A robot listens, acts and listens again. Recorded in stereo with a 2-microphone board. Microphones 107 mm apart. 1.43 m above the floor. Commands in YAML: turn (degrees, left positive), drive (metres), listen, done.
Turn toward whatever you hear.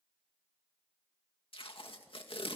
turn: 60
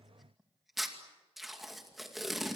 done: "Found it: tape being pulled, straight ahead, 2 to 4 m away."